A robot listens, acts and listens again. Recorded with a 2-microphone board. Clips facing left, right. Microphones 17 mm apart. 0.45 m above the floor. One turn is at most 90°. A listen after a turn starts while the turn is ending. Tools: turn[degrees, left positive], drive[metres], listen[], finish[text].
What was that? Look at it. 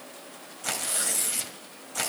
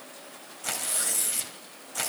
Action: turn[30]
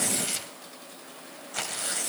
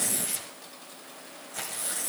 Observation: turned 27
Thought: So it is at 150° left.
Action: turn[90]
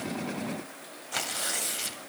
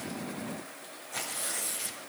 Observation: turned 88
Thought: The tearing paper is now 60° left.
Action: turn[60]
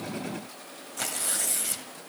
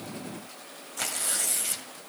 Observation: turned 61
Action: finish[Found it: tearing paper, straight ahead, 1 to 2 m away.]